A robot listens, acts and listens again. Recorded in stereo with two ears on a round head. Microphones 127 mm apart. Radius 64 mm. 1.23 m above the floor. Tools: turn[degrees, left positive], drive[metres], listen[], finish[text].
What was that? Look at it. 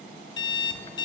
Thought: The alarm clock: about 30° left or 150° left.
Action: turn[30]
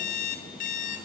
Thought: So it is at 115° left.
Action: turn[115]
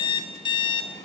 Thought: The alarm clock is now 35° left.
Action: turn[35]
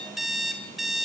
Action: finish[Facing the alarm clock.]